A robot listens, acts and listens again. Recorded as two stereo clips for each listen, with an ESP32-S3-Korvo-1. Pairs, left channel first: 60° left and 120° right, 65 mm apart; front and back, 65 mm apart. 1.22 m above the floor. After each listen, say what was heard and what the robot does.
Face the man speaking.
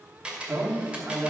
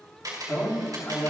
The man speaking: 60° right. Turn 60° right.
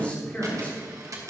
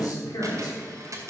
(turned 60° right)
The man speaking is now 10° right. Turn 10° right.
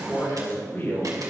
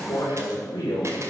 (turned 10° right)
Found it: a man speaking, straight ahead, over 4 m away.